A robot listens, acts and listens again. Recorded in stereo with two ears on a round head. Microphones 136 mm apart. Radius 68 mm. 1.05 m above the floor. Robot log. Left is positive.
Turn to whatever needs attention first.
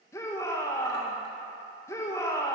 note: The shout: about 20° left or 160° left.
cmd yaw +20
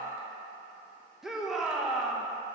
end: Facing the shout.